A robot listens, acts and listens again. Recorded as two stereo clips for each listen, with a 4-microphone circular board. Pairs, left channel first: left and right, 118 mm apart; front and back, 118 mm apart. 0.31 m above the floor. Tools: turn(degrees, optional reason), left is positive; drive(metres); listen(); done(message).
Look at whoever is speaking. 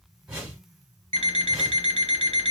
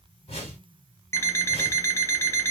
listen()
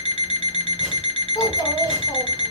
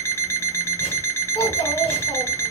turn(degrees=30, reason="The child speaking: 30° left.")
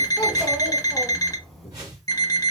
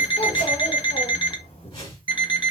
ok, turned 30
done("Facing the child speaking.")